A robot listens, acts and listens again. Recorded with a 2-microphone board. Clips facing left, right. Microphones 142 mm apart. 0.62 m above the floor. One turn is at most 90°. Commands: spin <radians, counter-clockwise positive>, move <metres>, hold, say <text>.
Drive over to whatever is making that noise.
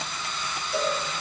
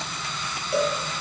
spin -1.05
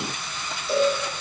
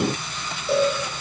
spin -1.05
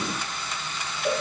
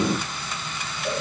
spin 0.26
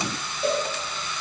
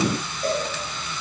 move 1.0
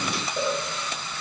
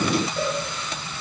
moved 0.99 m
spin 0.26
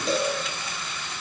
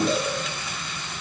move 1.0
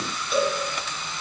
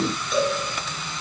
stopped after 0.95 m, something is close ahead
say I am next to the cowbell.